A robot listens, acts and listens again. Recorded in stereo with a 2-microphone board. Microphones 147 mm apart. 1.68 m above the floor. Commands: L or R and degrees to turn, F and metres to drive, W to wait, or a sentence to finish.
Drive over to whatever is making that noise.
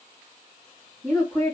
L30
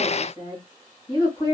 L150
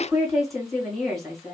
F1.0
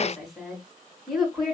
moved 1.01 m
F1.0
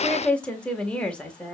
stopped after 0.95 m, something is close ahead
I am next to the woman speaking.